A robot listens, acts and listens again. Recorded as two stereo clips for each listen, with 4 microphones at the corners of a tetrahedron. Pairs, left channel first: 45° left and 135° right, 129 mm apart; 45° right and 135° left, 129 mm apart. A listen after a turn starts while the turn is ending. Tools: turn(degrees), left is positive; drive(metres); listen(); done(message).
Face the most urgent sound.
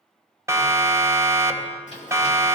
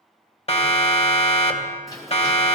turn(degrees=-70)
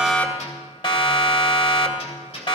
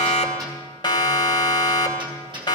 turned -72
done("Found it: a siren, straight ahead.")